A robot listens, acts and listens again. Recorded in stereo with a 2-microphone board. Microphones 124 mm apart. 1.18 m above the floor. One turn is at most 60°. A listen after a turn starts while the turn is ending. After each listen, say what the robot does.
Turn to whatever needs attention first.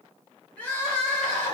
Turn 30° left.
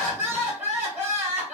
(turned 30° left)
Turn 15° right.
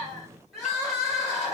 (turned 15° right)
Facing the crying.